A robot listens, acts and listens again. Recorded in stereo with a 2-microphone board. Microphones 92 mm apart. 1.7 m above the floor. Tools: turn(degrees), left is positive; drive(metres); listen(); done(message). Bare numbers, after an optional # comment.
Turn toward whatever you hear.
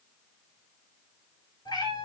# The cat meowing: about 50° left or 130° left.
turn(50)
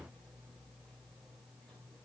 listen()
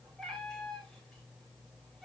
done("Found it: a cat meowing, straight ahead, over 4 m away.")